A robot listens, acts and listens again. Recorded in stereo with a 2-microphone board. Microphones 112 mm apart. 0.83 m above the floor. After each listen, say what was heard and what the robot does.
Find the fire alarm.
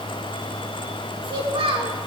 Keep listening.
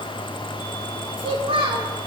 Keep listening.
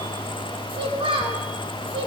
I can't make out a fire alarm, only a child speaking.